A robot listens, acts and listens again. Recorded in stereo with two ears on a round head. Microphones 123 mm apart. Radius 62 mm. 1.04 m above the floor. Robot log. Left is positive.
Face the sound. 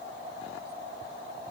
cmd idle
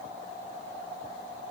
cmd idle
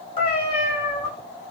note: The cat meowing: about 50° left or 130° left.
cmd yaw +50
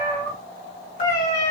note: So it is at 55° left.
cmd yaw +55
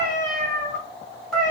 end: Found it: a cat meowing, straight ahead.